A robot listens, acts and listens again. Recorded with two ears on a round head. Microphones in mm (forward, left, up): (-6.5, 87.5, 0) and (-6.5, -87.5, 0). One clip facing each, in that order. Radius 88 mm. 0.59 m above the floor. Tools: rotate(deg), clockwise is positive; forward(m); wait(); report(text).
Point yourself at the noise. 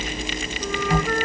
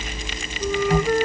rotate(30)
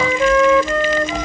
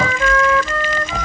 rotate(-15)
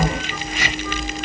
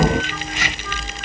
wait()
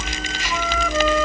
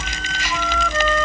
report("Found it: a flute, straight ahead.")